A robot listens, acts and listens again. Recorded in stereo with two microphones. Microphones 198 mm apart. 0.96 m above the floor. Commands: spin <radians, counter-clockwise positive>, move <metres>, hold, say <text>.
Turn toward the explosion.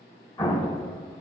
spin 0.44
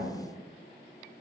hold
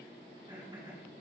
say I heard an explosion, but can't make it out now. It was about straight ahead or 130° left.